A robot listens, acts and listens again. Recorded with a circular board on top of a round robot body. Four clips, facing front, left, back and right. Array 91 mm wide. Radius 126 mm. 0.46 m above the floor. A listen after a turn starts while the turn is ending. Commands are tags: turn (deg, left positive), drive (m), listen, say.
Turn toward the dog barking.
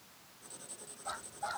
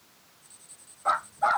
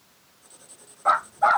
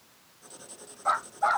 <turn deg="180"/>
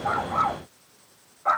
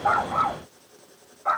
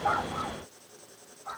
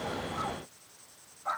<turn deg="35"/>
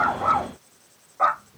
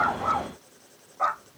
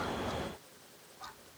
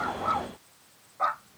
<say>Found it: a dog barking, straight ahead.</say>